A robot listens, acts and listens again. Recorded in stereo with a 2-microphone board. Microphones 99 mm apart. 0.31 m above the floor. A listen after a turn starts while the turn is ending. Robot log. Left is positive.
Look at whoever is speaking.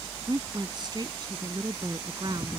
note: The woman speaking: about 45° right or 135° right.
cmd yaw -45
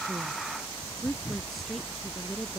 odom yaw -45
end: Facing the woman speaking.